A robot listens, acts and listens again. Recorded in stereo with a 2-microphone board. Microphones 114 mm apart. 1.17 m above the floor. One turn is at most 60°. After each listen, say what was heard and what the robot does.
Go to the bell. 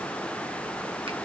Keep listening.
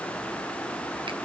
Keep listening.
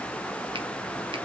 I can't make out a bell to turn to.